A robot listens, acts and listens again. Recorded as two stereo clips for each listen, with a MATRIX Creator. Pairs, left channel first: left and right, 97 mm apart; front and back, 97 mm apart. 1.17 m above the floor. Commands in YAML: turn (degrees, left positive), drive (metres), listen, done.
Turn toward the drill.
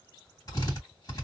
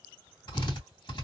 turn: 35
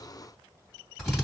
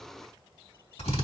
done: "Facing the drill, 2 to 4 m away."